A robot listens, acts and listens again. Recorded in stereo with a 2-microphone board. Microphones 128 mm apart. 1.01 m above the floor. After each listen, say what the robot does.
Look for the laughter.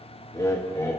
Turn 25° left.
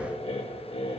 Turn 130° left.
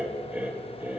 Turn 15° right.
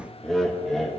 Facing the laughter.